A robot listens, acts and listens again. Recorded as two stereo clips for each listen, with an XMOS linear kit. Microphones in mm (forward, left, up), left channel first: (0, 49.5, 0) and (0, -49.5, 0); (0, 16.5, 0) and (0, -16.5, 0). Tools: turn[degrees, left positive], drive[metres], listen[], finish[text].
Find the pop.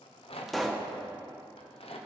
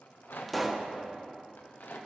Action: turn[30]
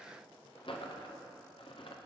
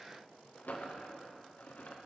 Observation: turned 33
Action: listen[]
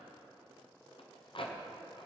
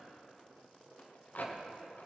Action: finish[I heard a pop, but can't make it out now. It was about 35° right or 145° left.]